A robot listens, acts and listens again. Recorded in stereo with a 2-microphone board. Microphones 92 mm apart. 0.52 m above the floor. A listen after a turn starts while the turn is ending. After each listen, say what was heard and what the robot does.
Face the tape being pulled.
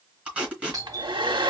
Turn 30° right.
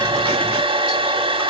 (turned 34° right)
Keep listening.
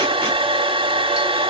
Keep listening.
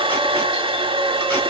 I heard tape being pulled, but can't make it out now. It was about 20° left or 135° right.